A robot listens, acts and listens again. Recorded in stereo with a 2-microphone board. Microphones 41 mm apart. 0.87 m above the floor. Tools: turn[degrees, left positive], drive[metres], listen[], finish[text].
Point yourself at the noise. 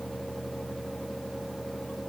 Action: listen[]
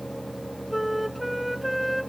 Action: turn[-30]
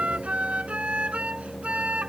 Thought: So it is at 150° right.
Action: turn[-150]
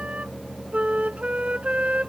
Thought: The flute is now 30° right.
Action: turn[-30]
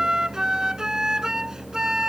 Thought: The flute is now 15° right.
Action: turn[-15]
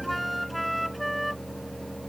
Action: finish[Facing the flute.]